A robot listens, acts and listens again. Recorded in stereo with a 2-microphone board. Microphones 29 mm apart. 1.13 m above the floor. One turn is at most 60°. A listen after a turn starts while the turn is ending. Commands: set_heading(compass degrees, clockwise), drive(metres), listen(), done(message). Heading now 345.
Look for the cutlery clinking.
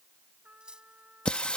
set_heading(20)
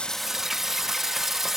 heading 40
listen()
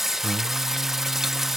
listen()
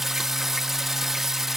done("I heard cutlery clinking, but can't make it out now. It was about 20° left or 90° right.")